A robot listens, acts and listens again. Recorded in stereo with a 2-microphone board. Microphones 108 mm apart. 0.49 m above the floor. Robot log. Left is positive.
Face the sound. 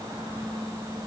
cmd idle
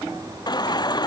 note: The baby crying: about 40° left or 140° left.
cmd yaw +40
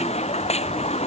note: So it is at 100° left.
cmd yaw +100
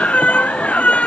note: The baby crying is now 10° left.
cmd yaw +10
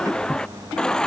end: Found it: a baby crying, straight ahead.